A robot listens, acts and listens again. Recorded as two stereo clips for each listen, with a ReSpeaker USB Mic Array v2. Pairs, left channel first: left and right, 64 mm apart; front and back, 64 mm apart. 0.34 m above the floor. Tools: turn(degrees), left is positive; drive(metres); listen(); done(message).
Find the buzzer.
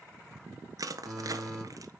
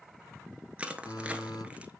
turn(degrees=-10)
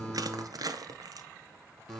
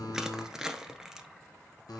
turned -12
done("Found it: a buzzer, straight ahead, 2 to 4 m away.")